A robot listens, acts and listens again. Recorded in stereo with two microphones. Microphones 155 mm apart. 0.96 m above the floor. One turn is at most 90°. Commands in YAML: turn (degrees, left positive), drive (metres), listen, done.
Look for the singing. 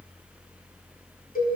listen: true
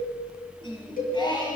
turn: 30
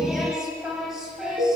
done: "Facing the singing, over 4 m away."